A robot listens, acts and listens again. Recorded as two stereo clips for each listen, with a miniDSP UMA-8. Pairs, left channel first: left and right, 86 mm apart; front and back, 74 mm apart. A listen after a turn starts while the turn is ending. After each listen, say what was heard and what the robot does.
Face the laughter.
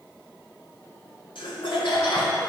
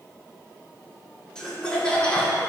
The laughter: 70° left. Turn 70° left.
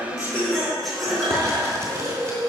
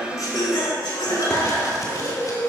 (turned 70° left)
Found it: laughter, straight ahead, 2 to 4 m away.